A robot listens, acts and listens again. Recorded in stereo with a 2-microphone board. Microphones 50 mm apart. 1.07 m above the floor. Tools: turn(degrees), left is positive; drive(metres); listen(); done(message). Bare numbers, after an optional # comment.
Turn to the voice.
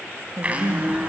# The woman speaking: about 65° right or 115° right.
turn(-65)
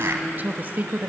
# So it is at 40° right.
turn(-40)
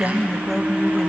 done("Facing the woman speaking, 1 to 2 m away.")